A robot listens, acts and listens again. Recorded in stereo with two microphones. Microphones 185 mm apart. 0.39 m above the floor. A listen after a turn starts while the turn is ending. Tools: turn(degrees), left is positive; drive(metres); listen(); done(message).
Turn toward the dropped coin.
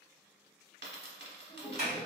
turn(degrees=-70)
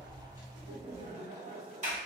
listen()
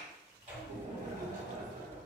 done("I heard a dropped coin, but can't make it out now. It was about straight ahead or 40° right.")